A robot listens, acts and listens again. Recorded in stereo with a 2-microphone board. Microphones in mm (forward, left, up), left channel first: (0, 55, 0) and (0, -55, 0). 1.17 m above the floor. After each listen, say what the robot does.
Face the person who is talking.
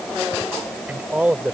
Turn 30° right.
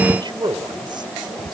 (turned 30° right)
Turn 135° right.
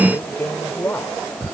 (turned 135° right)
Turn 20° left.
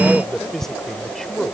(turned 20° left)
Found it: a man speaking, straight ahead.